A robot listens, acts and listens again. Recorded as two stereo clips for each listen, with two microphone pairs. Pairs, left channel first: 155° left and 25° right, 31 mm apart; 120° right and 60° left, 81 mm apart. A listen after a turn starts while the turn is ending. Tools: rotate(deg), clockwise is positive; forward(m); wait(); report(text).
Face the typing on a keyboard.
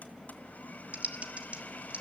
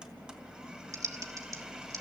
rotate(-10)
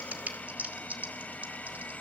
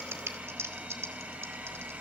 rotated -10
report("Facing the typing on a keyboard, 1 to 2 m away.")